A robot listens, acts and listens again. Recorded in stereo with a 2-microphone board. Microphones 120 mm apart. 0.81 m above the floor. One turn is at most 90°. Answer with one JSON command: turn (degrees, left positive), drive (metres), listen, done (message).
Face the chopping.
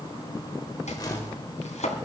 {"turn": 90}
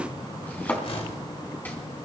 {"turn": 15}
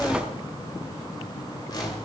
{"listen": true}
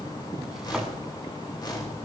{"listen": true}
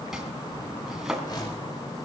{"done": "Facing the chopping, 2 to 4 m away."}